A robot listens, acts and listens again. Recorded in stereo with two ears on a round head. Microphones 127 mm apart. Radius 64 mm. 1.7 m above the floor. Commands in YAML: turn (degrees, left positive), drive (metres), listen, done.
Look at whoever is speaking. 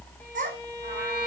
turn: -55
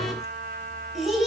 done: "Found it: a child speaking, straight ahead."